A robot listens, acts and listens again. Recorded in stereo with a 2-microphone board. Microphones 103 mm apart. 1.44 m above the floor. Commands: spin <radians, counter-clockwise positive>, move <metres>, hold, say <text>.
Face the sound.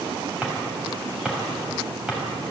spin -0.52
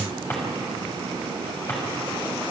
spin 0.44
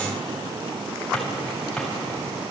say Facing the drawer.